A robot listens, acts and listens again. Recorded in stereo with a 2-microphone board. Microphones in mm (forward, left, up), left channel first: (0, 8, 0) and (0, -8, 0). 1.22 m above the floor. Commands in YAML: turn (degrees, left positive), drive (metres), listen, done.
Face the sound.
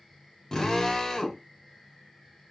turn: 35
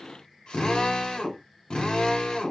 turn: 110
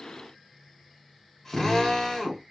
turn: 15
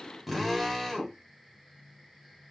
done: "Facing the drill."